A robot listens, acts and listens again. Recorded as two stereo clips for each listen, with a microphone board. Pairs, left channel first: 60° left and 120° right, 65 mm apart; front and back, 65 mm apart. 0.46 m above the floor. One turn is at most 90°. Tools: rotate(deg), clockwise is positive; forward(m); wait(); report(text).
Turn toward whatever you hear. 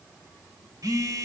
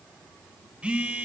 rotate(90)
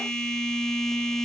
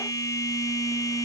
rotate(20)
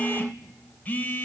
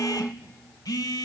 report("Found it: a phone buzzing, straight ahead, under 1 m away.")